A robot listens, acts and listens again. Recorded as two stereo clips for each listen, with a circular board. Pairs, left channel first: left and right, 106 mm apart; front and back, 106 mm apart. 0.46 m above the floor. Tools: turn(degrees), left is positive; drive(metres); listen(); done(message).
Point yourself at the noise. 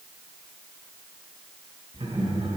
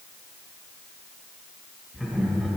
turn(degrees=-95)
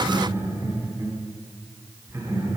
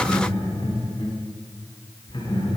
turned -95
turn(degrees=-30)
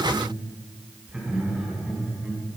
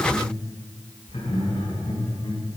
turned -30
turn(degrees=-10)
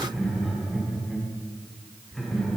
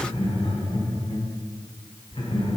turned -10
done("Found it: laughter, straight ahead, over 4 m away.")